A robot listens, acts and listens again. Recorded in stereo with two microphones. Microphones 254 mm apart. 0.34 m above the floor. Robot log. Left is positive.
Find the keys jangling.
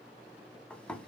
cmd idle
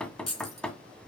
note: The keys jangling: about 70° left or 110° left.
cmd yaw +70
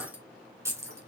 note: So it is at 10° right.
cmd yaw -10
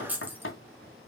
end: Facing the keys jangling.